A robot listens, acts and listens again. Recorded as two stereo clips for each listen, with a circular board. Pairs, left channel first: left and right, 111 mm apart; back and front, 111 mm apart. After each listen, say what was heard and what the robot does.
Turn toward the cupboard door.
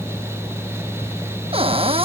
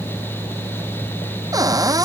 The cupboard door: 60° right. Turn 60° right.
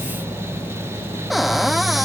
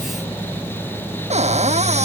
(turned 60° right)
Facing the cupboard door.